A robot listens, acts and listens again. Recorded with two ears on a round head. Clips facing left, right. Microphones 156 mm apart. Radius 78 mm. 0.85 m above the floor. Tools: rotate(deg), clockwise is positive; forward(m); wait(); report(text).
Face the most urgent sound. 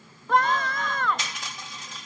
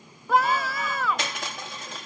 rotate(30)
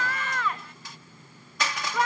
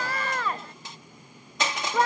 rotate(145)
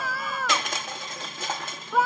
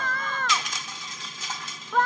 report("Found it: a scream, straight ahead.")